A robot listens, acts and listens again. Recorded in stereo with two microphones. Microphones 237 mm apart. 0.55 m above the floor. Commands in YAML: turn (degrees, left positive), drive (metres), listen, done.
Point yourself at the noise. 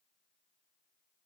listen: true
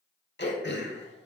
turn: 45
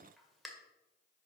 done: "Facing the throat clearing."